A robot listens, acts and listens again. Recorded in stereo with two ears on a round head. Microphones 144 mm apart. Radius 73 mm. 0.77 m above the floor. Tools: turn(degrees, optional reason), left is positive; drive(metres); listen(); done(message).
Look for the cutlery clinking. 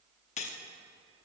turn(degrees=45, reason="The cutlery clinking: about 45° left or 135° left.")
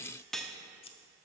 done("Facing the cutlery clinking, under 1 m away.")